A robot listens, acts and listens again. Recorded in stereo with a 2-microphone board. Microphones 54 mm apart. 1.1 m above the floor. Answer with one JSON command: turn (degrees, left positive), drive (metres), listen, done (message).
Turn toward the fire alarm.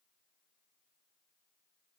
{"listen": true}
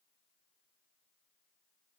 {"listen": true}
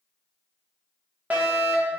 {"turn": -30}
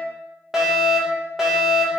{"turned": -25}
{"turn": -10}
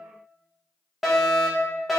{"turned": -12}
{"done": "Facing the fire alarm, 1 to 2 m away."}